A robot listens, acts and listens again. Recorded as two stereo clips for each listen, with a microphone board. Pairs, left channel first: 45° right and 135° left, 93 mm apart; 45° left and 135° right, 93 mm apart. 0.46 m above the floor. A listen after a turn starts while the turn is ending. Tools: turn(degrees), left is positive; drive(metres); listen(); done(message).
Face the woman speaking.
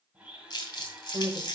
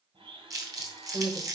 turn(degrees=-165)
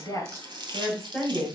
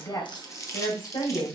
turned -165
turn(degrees=40)
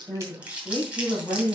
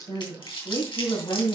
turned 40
turn(degrees=10)
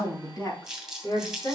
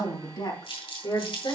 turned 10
done("Facing the woman speaking.")